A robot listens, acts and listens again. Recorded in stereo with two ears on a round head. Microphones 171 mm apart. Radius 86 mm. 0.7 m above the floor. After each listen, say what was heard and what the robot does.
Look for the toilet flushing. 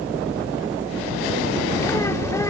Keep listening.
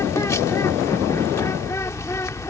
Keep listening.
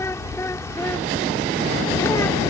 I can't make out a toilet flushing, only a bird.